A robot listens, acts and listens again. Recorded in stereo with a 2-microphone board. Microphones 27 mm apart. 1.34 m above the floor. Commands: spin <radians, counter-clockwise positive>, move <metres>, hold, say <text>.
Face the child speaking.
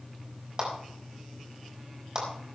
hold
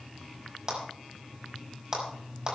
hold
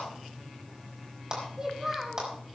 spin -0.35
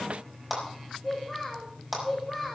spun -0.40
say Found it: a child speaking, straight ahead, 1 to 2 m away.